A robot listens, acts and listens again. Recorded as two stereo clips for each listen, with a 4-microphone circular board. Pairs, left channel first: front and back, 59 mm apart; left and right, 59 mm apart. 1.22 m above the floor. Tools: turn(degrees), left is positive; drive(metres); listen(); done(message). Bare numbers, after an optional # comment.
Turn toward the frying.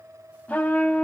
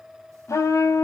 listen()
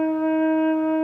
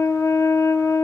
listen()
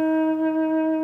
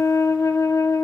done("I can't make out frying to turn to.")